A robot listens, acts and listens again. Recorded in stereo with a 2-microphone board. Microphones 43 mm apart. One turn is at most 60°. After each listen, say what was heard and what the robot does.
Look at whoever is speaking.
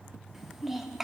Turn 30° right.
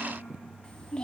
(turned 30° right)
So it is at 20° left. Turn 20° left.
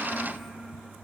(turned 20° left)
Facing the child speaking.